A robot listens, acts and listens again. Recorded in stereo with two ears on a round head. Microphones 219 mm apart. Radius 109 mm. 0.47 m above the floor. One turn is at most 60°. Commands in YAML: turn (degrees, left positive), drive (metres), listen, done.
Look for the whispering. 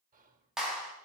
turn: -35
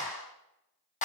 listen: true
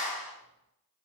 listen: true
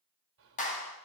turn: -60
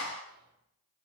turn: -50
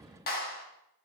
listen: true
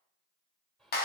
done: "Facing the whispering, 2 to 4 m away."